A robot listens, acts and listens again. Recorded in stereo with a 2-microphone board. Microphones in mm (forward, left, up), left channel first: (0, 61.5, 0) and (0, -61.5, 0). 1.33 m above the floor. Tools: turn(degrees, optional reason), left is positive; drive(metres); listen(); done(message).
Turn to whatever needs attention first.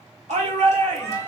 turn(degrees=-75, reason="The shout: about 75° right or 105° right.")
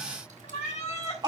turn(degrees=-35, reason="So it is at 35° right.")
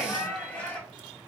turn(degrees=10, reason="The shout is now 10° left.")
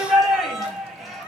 done("Found it: a shout, straight ahead.")